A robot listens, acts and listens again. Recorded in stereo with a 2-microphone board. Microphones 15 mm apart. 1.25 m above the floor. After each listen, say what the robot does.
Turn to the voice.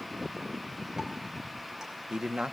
Turn 90° right.
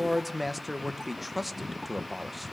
Turn 10° right.
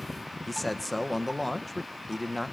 Found it: a man speaking, straight ahead, under 1 m away.